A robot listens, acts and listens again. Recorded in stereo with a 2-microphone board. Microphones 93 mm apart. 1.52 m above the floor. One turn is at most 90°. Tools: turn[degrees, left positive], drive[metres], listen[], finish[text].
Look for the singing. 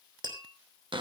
Action: listen[]
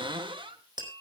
Action: listen[]
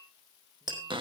Action: finish[I can't make out singing, only tapping and a cupboard door.]